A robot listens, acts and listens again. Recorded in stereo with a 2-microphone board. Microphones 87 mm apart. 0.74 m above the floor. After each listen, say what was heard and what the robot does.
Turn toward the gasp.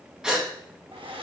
Turn 30° right.
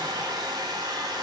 Keep listening.
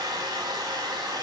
I heard a gasp, but can't make it out now. It was about 20° left or 140° right.